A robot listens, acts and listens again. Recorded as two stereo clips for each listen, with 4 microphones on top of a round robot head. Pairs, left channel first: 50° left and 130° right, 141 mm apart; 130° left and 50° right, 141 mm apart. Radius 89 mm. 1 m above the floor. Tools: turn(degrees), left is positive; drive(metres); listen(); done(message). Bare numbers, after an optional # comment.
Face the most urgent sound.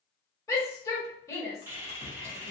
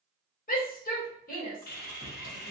# The shout: 120° left.
turn(120)
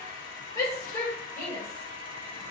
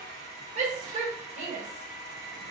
# The shout is now 15° right.
turn(-15)
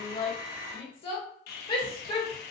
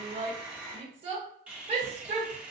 done("Facing the shout.")